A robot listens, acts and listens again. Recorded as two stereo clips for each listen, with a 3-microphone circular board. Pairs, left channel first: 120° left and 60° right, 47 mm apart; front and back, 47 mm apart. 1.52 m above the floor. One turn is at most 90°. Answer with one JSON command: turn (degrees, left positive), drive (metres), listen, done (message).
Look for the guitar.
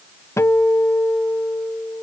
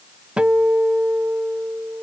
{"turn": 90}
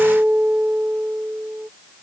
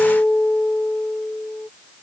{"turn": -10}
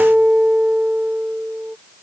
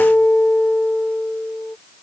{"done": "Found it: a guitar, straight ahead."}